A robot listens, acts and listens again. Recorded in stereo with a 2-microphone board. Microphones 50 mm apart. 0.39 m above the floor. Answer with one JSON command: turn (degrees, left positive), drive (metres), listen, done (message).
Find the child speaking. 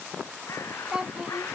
{"turn": -20}
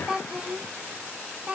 {"turn": -25}
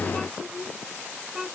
{"turn": -30}
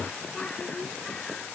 {"listen": true}
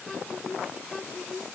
{"turn": 10}
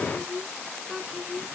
{"done": "Found it: a child speaking, straight ahead."}